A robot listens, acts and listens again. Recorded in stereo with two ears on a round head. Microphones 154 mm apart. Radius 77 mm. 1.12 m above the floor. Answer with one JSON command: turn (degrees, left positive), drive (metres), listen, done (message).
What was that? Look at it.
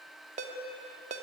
{"turn": -40}
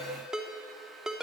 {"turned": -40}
{"done": "Facing the ringtone, 2 to 4 m away."}